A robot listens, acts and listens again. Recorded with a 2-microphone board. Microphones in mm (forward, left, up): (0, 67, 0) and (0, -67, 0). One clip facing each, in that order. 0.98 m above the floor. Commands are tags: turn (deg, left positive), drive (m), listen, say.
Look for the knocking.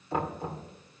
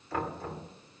<turn deg="20"/>
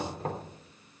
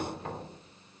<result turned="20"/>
<turn deg="140"/>
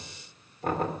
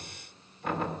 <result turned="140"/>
<turn deg="45"/>
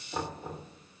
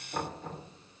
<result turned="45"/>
<turn deg="10"/>
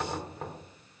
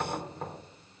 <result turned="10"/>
<say>Found it: knocking, straight ahead, 2 to 4 m away.</say>